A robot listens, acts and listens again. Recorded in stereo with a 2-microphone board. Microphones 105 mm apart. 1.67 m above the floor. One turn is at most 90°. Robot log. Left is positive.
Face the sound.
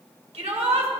cmd yaw -90
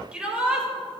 note: So it is at 10° right.
cmd yaw -10
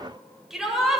end: Facing the shout.